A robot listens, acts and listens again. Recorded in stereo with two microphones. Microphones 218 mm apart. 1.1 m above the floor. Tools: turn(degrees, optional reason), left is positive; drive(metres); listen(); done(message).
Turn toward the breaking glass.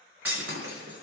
turn(degrees=-90)
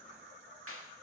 done("Facing where the breaking glass came from. I can't hear it now.")